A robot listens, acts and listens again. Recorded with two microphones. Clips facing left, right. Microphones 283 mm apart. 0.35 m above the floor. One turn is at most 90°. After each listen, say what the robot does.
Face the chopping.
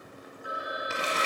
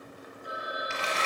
Keep listening.
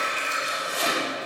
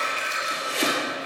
Turn 90° right.
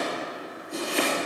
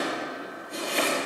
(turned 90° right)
Facing the chopping, 2 to 4 m away.